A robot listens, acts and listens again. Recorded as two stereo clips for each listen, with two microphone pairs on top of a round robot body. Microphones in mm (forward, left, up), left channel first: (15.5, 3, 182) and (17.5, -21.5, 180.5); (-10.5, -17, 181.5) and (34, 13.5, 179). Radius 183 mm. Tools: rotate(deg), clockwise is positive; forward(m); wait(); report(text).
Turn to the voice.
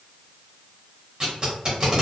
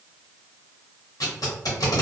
wait()
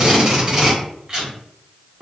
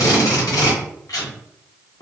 wait()
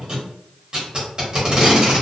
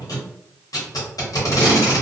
report("I can't make out anyone speaking, only tape being pulled.")